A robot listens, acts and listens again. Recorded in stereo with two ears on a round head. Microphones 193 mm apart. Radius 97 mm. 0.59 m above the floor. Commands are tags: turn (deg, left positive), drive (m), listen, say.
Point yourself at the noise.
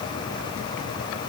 <listen/>
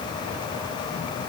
<listen/>
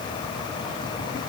<say>I can't make out anything to turn to.</say>